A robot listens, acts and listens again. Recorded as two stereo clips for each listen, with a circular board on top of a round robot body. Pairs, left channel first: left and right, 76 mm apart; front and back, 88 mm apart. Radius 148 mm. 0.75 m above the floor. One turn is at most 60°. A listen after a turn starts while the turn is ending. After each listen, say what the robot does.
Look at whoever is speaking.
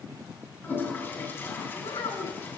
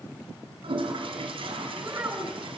Turn 60° left.
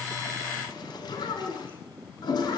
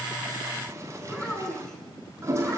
Turn 60° left.
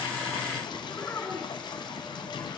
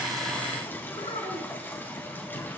Turn 30° left.
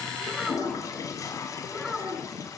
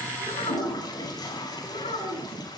Found it: a child speaking, straight ahead.